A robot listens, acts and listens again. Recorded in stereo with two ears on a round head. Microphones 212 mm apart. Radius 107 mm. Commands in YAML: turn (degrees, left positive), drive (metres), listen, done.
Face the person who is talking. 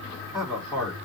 turn: 20
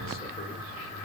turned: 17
listen: true
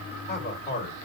turn: 135
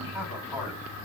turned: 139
turn: -10
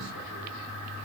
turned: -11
listen: true
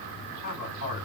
done: "Found it: a man speaking, straight ahead, over 4 m away."